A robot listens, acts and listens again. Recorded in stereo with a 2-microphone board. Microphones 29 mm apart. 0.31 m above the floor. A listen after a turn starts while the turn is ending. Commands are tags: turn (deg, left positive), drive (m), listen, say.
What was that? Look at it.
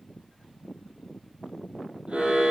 <turn deg="-45"/>
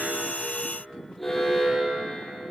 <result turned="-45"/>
<say>Facing the alarm.</say>